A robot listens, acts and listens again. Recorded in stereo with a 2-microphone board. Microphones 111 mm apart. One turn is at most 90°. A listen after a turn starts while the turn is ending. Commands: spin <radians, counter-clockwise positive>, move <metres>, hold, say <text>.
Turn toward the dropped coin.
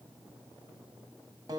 hold
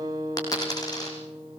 spin 0.61
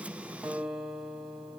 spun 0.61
hold
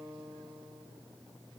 say I heard a dropped coin, but can't make it out now. It was about straight ahead or 110° left.